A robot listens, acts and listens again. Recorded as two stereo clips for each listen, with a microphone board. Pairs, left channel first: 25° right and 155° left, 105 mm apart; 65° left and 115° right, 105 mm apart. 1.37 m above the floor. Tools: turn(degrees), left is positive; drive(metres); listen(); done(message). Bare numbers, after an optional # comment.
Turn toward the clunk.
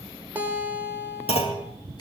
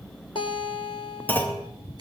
done("Facing the clunk.")